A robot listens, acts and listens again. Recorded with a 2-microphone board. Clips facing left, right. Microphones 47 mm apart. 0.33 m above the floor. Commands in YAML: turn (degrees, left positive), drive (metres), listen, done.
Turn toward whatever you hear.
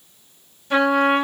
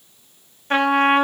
turn: -45
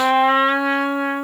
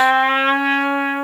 turn: -85
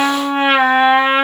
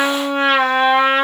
turn: 20
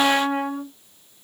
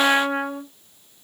done: "Found it: a trumpet, straight ahead, 1 to 2 m away."